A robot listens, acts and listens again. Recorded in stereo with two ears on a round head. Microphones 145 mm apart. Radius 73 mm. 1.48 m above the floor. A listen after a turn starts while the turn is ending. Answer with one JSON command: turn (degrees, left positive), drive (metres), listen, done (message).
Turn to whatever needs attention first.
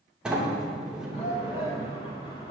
{"turn": 40}
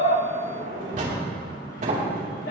{"listen": true}
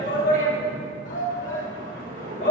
{"turn": 100}
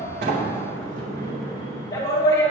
{"turn": 20}
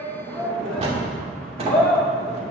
{"done": "Facing the shout, 2 to 4 m away."}